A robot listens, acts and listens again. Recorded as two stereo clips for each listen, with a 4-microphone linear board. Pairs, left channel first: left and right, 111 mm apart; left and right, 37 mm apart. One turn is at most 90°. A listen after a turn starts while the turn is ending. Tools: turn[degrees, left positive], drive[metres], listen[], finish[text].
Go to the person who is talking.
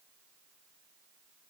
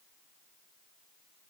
Action: listen[]
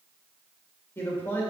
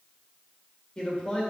Thought: The man speaking: about 20° left or 160° left.
Action: turn[20]
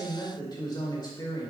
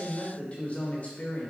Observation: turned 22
Thought: So it is at 135° left.
Action: turn[90]
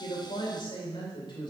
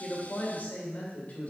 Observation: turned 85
Thought: The man speaking is now 50° left.
Action: turn[50]
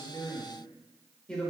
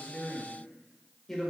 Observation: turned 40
Thought: The man speaking is now 10° left.
Action: turn[10]
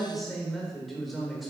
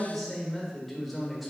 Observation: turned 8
Action: drive[1.0]
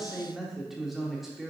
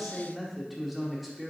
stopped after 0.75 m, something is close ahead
Action: finish[I am next to the man speaking.]